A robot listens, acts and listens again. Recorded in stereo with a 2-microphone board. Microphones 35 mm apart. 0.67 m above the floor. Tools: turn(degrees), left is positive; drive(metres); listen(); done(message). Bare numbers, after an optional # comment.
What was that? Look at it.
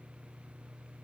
listen()
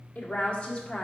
# The woman speaking: about 30° left or 150° left.
turn(30)
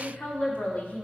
# The woman speaking: about 35° left or 145° left.
turn(35)
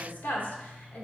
# So it is at 120° left.
turn(120)
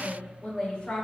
# The woman speaking is now 40° left.
turn(40)
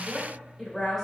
done("Facing the woman speaking.")